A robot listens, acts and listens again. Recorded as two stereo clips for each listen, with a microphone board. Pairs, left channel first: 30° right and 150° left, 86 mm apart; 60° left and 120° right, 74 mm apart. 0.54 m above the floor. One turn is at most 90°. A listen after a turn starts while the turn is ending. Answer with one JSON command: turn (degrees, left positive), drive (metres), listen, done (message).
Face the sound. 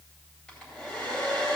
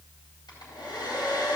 {"turn": 50}
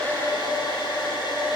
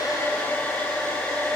{"turn": -10}
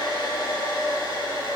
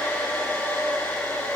{"done": "Facing the hair dryer."}